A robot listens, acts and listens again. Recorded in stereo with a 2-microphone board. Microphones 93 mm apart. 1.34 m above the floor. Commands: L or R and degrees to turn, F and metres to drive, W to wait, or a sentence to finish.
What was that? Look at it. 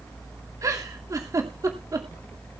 R35
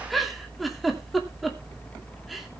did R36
Facing the giggle.